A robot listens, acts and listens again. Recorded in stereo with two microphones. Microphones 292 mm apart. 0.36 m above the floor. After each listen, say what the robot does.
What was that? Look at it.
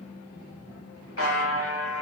Turn 45° left.
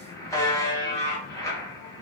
Turn 10° left.
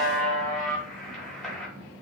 Facing the buzzer, under 1 m away.